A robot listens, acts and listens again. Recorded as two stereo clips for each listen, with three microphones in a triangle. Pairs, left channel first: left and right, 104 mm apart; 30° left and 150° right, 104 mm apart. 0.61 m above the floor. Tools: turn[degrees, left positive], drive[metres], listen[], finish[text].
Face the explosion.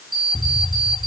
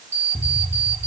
Thought: The explosion: 30° left.
Action: turn[30]
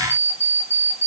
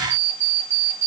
Action: finish[I heard an explosion from this way, but can't make it out now.]